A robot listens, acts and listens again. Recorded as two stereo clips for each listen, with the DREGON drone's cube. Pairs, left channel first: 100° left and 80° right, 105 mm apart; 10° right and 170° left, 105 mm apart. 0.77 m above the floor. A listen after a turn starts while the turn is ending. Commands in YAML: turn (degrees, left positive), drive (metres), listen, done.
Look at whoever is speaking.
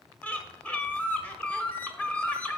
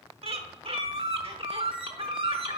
listen: true
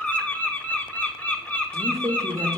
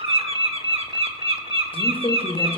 turn: -25
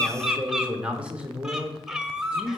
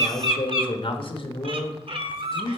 done: "Found it: a man speaking, straight ahead."